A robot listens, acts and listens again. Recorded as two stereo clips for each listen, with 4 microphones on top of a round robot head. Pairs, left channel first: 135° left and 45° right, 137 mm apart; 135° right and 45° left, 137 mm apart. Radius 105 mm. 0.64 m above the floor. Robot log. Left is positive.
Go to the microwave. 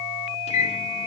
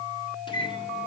note: The microwave: 175° left.
cmd yaw +175
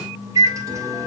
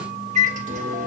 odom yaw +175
note: The microwave is now 20° left.
cmd yaw +20
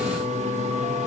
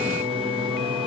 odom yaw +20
cmd fwd 1.0
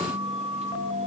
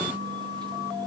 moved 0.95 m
cmd idle
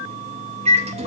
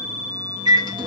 note: The microwave is now 10° right.
cmd yaw -10
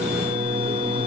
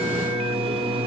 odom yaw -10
cmd fwd 1.0
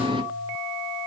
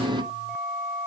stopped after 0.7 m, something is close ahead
end: I am next to the microwave.